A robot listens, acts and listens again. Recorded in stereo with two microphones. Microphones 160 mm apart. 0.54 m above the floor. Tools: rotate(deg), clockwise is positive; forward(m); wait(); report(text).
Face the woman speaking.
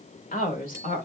rotate(-55)
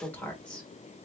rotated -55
report("Facing the woman speaking, 1 to 2 m away.")